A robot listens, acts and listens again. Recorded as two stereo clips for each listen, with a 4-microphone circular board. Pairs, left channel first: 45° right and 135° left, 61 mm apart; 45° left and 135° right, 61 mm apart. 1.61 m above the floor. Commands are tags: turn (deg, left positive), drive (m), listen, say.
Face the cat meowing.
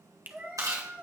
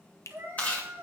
<turn deg="-170"/>
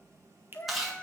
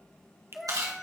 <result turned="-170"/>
<turn deg="-40"/>
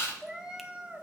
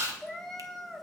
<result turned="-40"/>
<turn deg="130"/>
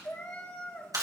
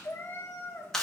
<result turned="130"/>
<turn deg="10"/>
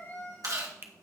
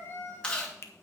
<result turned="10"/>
<say>Found it: a cat meowing, straight ahead.</say>